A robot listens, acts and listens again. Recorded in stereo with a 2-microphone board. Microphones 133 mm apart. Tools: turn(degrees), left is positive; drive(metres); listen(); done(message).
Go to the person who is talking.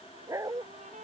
listen()
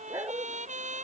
listen()
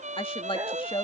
turn(degrees=40)
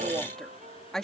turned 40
drive(metres=1.0)
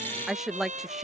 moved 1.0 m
drive(metres=1.0)
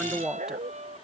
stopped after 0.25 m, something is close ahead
done("Arrived at the woman speaking, straight ahead.")